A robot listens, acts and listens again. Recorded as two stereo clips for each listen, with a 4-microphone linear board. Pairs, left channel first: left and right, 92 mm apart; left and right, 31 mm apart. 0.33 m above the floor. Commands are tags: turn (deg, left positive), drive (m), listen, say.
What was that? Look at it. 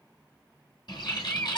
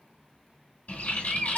<turn deg="55"/>
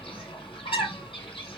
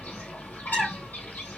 <turn deg="70"/>
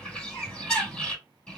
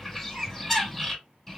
<turn deg="10"/>
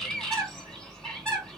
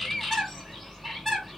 <say>Facing the bird, 1 to 2 m away.</say>